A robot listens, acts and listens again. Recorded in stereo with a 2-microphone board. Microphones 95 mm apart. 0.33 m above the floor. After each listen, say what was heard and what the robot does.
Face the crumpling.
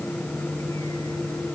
Keep listening.
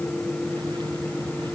Keep listening.
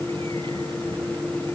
I can't make out crumpling to turn to.